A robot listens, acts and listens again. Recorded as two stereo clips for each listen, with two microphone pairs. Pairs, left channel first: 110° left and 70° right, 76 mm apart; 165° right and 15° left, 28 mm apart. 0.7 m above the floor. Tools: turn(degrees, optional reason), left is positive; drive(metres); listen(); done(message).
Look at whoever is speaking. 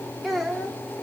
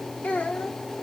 turn(degrees=-165, reason="The child speaking: 165° right.")
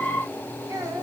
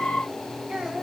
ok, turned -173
turn(degrees=-35, reason="The child speaking is now 35° right.")
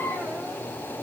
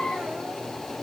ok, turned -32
listen()
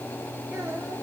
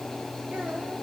listen()
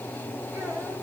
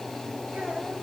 done("Facing where the child speaking came from. I can't hear it now.")